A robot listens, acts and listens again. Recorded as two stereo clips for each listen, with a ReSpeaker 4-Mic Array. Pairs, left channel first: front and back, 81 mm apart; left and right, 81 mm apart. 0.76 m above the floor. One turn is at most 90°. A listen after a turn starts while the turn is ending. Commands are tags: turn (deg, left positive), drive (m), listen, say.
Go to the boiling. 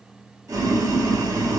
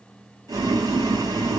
<turn deg="-90"/>
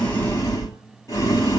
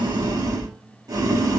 <turn deg="-50"/>
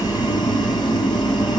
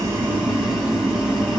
<turn deg="-10"/>
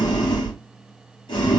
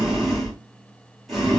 <drive m="1.0"/>
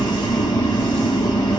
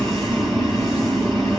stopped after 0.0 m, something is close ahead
<say>Blocked. The boiling is further on, straight ahead.</say>